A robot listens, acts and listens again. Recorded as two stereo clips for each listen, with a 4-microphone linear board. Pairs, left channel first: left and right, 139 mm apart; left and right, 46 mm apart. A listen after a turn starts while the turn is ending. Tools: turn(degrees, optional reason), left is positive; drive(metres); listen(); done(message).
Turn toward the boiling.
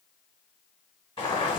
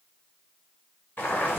turn(degrees=40, reason="The boiling: about 40° left or 140° left.")
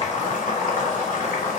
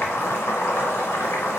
turn(degrees=95, reason="So it is at 95° left.")
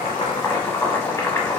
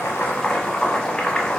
turn(degrees=20, reason="The boiling is now 20° left.")
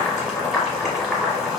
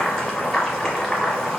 done("Facing the boiling.")